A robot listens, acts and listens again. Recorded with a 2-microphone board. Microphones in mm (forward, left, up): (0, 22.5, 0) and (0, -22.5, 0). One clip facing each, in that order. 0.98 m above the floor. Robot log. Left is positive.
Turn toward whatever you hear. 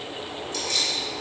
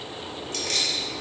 note: The keys jangling: about 60° right or 120° right.
cmd yaw -60
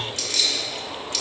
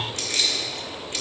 note: So it is at 25° right.
cmd yaw -25
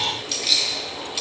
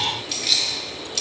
note: The keys jangling is now 15° left.
cmd yaw +15
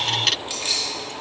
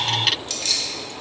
note: The keys jangling is now 20° left.
cmd yaw +20
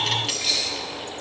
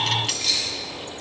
note: The keys jangling is now 15° left.
cmd yaw +15
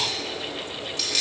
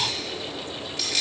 end: Found it: keys jangling, straight ahead.